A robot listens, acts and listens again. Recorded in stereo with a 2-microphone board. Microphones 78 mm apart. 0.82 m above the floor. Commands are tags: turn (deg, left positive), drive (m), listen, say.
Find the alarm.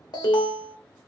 <turn deg="65"/>
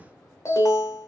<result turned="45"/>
<turn deg="45"/>
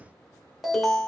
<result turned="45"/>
<say>Found it: an alarm, straight ahead.</say>